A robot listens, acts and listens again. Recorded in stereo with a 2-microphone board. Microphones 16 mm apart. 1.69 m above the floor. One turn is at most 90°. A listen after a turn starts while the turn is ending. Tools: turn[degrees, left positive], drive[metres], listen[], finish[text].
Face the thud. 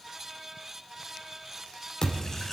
Thought: The thud: about 50° left or 130° left.
Action: turn[50]
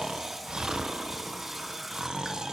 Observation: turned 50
Action: listen[]
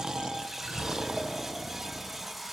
Action: finish[I heard a thud, but can't make it out now. It was about straight ahead or 80° left.]